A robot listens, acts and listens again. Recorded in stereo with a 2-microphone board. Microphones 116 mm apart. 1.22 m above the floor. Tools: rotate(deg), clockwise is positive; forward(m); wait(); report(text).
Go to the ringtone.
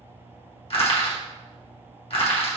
wait()
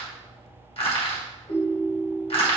rotate(-75)
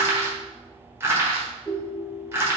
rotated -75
rotate(-25)
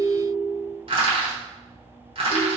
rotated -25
forward(1.0)
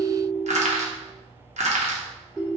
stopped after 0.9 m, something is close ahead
rotate(10)
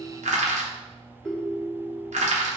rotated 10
report("Arrived at the ringtone, straight ahead.")